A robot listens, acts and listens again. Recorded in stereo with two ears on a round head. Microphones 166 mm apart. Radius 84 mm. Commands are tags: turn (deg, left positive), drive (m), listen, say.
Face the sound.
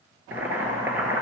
<turn deg="-30"/>
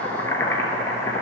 <turn deg="15"/>
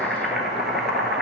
<say>Found it: boiling, straight ahead, 1 to 2 m away.</say>